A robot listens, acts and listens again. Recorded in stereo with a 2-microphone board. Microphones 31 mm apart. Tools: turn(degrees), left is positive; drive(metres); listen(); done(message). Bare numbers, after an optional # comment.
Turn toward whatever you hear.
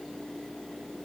listen()
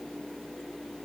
listen()
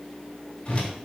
# The whoosh: about 35° left or 145° left.
turn(35)
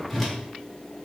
done("Found it: a whoosh, straight ahead.")